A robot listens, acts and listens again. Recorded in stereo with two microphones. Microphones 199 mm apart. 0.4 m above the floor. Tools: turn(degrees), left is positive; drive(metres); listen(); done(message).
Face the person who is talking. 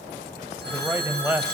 turn(degrees=-30)
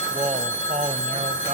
turn(degrees=-140)
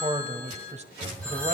turn(degrees=-40)
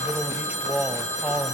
turn(degrees=-10)
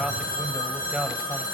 done("Facing the man speaking, 1 to 2 m away.")